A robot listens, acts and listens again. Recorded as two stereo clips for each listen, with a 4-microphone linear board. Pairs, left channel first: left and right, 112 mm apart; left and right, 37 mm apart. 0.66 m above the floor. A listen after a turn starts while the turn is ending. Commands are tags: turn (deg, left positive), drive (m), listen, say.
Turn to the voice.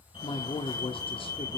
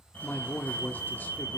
<turn deg="55"/>
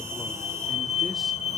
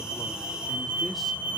<listen/>
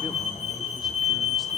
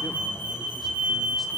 <listen/>
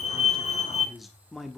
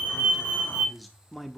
<say>Facing the man speaking.</say>